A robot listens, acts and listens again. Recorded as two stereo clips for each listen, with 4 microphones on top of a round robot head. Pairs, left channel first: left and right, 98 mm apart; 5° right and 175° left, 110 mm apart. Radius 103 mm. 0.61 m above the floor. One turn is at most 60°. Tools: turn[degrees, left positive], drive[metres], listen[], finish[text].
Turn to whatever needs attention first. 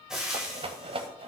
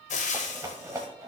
Action: listen[]
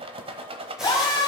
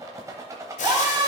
Thought: The scream: 125° left.
Action: turn[60]
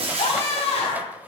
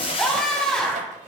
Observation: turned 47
Thought: The scream is now 75° left.
Action: turn[60]
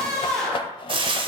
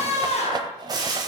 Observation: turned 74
Action: finish[Found it: a scream, straight ahead, 2 to 4 m away.]